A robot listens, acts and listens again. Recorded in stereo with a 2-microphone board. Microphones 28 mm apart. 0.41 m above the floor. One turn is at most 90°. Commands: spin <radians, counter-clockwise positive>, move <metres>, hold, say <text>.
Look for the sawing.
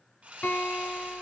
spin -1.05
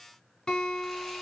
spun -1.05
hold
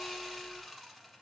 say Found it: sawing, straight ahead.